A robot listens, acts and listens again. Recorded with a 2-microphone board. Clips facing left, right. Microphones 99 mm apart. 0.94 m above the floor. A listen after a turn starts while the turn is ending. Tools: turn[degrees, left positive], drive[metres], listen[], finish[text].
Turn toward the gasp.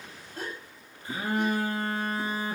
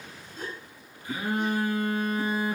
Action: turn[90]
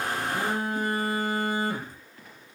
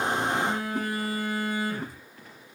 Action: finish[I heard a gasp from this way, but can't make it out now.]